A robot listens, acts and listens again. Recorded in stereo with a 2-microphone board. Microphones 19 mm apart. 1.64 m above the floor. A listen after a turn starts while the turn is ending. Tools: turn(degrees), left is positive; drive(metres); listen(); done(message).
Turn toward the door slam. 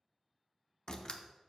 turn(degrees=45)
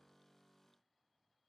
listen()
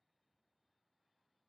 done("I heard a door slam, but can't make it out now. It was about straight ahead or 90° left.")